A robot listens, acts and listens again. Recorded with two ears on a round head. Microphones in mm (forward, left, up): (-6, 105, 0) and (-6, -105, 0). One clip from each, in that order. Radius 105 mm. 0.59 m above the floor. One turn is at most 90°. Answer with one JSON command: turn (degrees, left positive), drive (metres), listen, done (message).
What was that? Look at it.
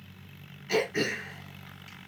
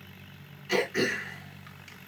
{"turn": -30}
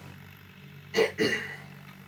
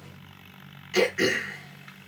{"turn": -90}
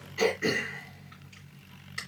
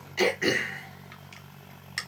{"turn": -50}
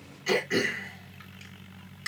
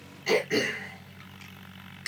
{"done": "Found it: throat clearing, straight ahead, 2 to 4 m away."}